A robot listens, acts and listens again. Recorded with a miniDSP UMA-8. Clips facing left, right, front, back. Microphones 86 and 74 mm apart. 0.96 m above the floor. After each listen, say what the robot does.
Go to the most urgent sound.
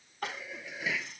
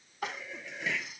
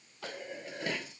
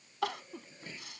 Turn 175° right.
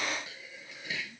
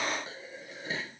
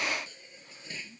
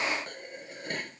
Keep listening.
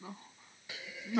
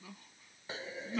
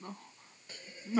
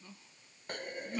Turn 35° left.
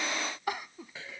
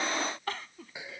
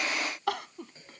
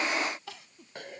Turn 15° left.
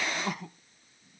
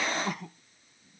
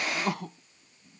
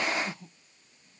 Drive 1.0 m forward.
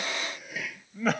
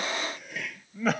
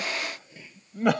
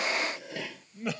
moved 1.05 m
Drive 1.0 m forward.
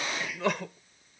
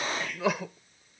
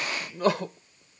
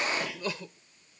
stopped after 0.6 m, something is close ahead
I am next to the crying.